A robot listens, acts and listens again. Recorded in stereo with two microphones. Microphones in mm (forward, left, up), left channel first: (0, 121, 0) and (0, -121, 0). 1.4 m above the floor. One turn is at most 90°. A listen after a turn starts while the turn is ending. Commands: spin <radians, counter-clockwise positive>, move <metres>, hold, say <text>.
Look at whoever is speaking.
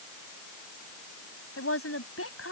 spin 1.13
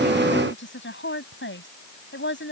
spin 0.87
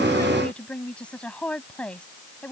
say Found it: a woman speaking, straight ahead.